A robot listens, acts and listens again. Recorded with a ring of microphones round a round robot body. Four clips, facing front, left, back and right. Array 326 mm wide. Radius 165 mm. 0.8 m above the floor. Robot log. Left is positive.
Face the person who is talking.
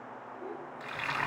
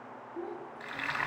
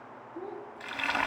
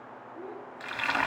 note: The child speaking: 145° left.
cmd yaw +145
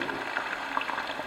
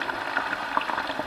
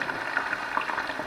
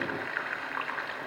cmd idle
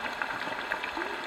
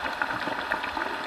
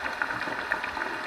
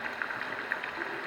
cmd idle
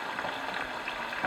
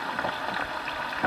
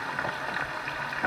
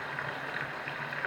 end: Facing where the child speaking came from. I can't hear it now.